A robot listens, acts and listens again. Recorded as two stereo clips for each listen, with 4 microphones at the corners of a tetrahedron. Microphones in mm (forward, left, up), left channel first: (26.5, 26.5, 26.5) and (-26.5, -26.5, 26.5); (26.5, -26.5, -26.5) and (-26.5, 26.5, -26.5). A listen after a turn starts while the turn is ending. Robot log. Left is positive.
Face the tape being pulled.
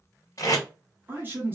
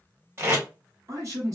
note: The tape being pulled: 85° left.
cmd yaw +85
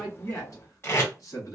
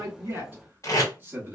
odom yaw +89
note: The tape being pulled is now 10° right.
cmd yaw -10
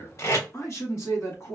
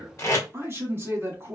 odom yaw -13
end: Facing the tape being pulled, 1 to 2 m away.